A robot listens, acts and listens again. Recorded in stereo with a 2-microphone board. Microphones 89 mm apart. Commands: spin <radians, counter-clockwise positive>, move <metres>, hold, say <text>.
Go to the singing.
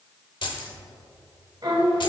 spin -0.96
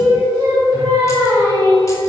spin -0.87
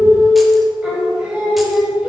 spin -0.17
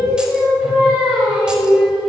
move 1.0
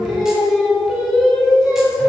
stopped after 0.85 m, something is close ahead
say I am next to the singing.